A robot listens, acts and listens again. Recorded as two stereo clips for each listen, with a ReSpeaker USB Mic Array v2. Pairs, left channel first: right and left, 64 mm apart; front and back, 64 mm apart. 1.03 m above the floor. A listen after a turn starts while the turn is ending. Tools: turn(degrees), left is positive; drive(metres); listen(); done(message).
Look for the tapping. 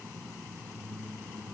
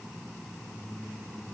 listen()
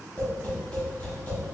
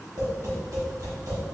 turn(degrees=-155)
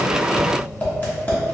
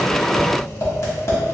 turn(degrees=-35)
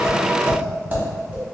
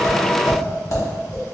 turn(degrees=30)
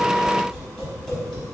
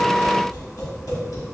turn(degrees=-10)
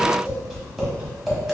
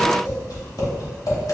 done("Found it: tapping, straight ahead.")